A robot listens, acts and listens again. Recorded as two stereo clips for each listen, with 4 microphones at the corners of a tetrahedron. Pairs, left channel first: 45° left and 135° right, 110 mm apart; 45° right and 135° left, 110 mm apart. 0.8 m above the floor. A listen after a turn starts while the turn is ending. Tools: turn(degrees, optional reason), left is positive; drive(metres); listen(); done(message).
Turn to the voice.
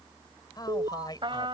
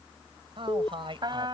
turn(degrees=95, reason="The man speaking: 95° left.")
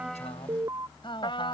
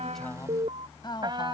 done("Facing the man speaking.")